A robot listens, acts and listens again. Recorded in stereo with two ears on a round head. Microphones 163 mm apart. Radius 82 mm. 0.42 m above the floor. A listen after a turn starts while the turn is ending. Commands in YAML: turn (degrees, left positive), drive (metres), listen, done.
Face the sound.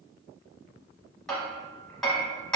turn: 30
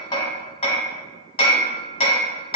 turn: 145
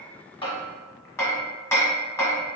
turn: 15
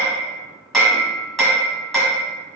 done: "Found it: hammering, straight ahead."